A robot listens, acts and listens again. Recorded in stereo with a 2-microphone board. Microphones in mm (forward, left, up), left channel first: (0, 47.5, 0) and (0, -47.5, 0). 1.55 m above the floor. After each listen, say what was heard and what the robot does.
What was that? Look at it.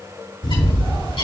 The bird: about 65° left or 115° left. Turn 65° left.
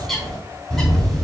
Found it: a bird, straight ahead, 2 to 4 m away.